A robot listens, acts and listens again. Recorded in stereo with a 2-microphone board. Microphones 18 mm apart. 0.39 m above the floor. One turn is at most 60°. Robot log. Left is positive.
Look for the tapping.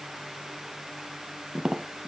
note: The tapping: about 50° right or 130° right.
cmd yaw -50
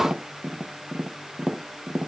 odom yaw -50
note: So it is at 80° right.
cmd yaw -60
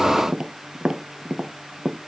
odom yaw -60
note: The tapping is now 35° right.
cmd yaw -35
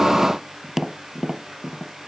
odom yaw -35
note: The tapping is now 10° right.
cmd yaw -10
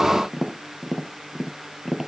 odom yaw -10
end: Facing the tapping.